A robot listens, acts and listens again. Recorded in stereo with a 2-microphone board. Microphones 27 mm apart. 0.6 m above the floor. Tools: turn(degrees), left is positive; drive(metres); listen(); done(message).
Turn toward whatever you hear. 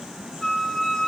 turn(degrees=40)
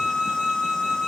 turn(degrees=90)
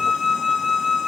turn(degrees=-20)
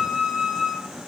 done("Found it: a flute, straight ahead.")